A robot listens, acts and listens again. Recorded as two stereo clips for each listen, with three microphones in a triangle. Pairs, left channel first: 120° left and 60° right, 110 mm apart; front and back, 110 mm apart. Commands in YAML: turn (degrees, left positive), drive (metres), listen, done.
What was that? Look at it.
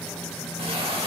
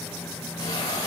turn: -50
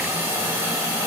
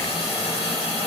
done: "Found it: a hiss, straight ahead, 2 to 4 m away."